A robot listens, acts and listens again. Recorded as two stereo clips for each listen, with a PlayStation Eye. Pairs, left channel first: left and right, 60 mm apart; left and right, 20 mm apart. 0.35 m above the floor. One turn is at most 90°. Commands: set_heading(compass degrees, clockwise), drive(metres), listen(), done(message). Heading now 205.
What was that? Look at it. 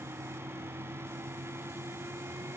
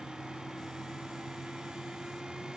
listen()
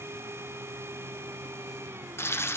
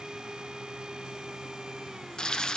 set_heading(160)
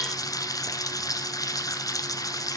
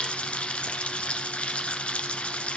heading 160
set_heading(70)
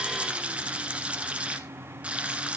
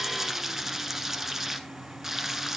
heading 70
set_heading(90)
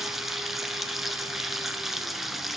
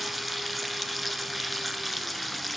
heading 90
done("Facing the frying.")